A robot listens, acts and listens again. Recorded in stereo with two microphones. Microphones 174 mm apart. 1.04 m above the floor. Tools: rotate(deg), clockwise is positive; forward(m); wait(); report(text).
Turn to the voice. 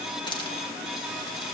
wait()
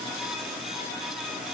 wait()
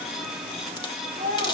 rotate(65)
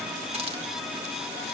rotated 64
wait()
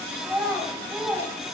report("Facing the child speaking.")